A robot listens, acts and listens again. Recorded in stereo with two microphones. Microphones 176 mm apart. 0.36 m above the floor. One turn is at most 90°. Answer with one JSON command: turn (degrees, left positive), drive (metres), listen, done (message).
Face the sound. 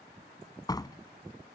{"turn": 20}
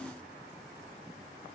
{"listen": true}
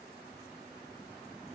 {"done": "I heard a door slam, but can't make it out now. It was about straight ahead or 140° left."}